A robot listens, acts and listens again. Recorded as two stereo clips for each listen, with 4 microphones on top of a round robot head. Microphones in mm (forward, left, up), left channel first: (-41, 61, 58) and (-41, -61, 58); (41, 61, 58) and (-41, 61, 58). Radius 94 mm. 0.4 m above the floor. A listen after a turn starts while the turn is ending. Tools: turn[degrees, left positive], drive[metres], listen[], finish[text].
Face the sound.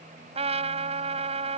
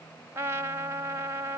Thought: The trumpet: 120° right.
Action: turn[-120]
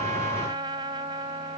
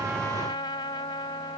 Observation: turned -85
Thought: The trumpet is now 35° right.
Action: turn[-35]
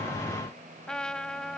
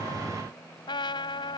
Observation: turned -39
Action: finish[Found it: a trumpet, straight ahead.]